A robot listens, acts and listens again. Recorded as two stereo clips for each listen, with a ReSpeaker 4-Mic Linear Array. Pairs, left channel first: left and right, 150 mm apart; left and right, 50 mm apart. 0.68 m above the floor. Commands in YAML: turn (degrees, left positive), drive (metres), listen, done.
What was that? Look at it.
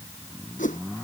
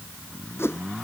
turn: 60
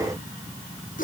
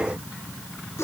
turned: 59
turn: 65
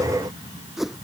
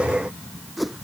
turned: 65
done: "Found it: a whoosh, straight ahead."